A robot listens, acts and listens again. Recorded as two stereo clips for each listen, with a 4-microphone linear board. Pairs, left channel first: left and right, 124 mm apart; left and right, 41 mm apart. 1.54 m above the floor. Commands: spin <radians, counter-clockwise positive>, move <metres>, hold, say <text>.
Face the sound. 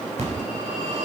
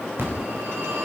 spin -1.13
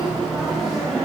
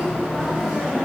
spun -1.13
say Found it: a phone ringing, straight ahead.